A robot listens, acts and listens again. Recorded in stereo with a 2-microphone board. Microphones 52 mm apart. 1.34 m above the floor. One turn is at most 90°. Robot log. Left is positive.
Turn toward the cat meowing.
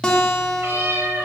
note: The cat meowing: about 45° right or 135° right.
cmd yaw -45
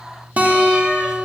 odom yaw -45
cmd idle
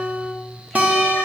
cmd idle
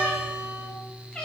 note: So it is at 15° left.
cmd yaw +15
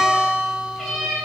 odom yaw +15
end: Found it: a cat meowing, straight ahead.